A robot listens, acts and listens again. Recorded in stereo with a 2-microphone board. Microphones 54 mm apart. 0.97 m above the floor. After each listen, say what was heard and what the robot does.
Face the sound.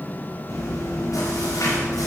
Turn 90° left.
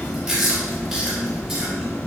So it is at 10° right. Turn 10° right.
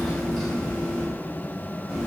Found it: chewing, straight ahead, over 4 m away.